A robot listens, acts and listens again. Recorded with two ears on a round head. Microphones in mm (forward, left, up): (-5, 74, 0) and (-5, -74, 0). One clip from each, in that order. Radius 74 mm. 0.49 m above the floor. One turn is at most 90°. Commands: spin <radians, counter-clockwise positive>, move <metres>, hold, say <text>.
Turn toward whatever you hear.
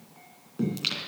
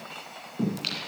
spin 0.52
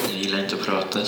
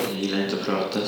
spin 1.57
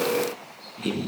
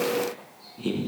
spin 0.52
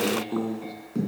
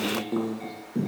say Facing the singing, 1 to 2 m away.